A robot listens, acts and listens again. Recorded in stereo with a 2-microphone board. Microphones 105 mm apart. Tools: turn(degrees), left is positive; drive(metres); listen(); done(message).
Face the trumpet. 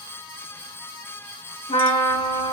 turn(degrees=90)
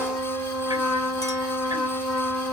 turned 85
turn(degrees=10)
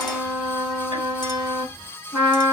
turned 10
done("Found it: a trumpet, straight ahead, 2 to 4 m away.")